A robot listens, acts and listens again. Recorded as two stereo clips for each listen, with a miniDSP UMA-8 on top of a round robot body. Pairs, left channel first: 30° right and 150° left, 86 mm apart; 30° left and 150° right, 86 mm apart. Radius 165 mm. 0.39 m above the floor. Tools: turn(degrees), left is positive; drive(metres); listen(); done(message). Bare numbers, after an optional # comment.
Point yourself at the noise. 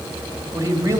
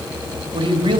# The man speaking: 155° right.
turn(-155)
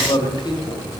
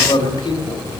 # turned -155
done("Found it: a man speaking, straight ahead.")